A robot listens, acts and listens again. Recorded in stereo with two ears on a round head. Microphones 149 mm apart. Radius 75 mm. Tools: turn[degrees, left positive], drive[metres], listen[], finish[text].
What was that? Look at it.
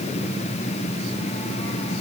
Action: listen[]
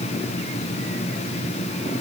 Action: listen[]
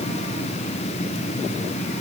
Action: finish[I can't make out anything to turn to.]